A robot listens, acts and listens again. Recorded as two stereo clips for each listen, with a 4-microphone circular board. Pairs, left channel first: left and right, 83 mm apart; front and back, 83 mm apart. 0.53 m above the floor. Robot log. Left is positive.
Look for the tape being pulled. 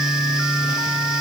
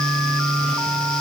cmd idle
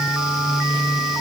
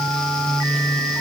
cmd idle
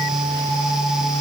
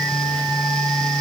end: I can't make out tape being pulled.